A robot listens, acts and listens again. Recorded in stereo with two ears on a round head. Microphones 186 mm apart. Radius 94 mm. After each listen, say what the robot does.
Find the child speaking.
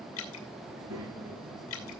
Turn 90° right.
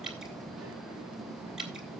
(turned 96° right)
Keep listening.
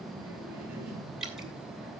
Turn 10° right.
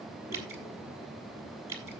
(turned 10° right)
Keep listening.
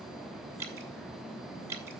Keep listening.
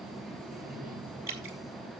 Found it: a child speaking, straight ahead.